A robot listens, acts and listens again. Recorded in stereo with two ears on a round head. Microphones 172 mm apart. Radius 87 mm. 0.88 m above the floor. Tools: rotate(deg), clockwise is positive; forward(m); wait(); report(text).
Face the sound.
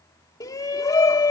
rotate(-20)
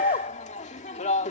rotate(-140)
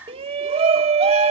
rotate(30)
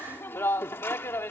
rotate(-10)
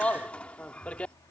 report("Facing the shout.")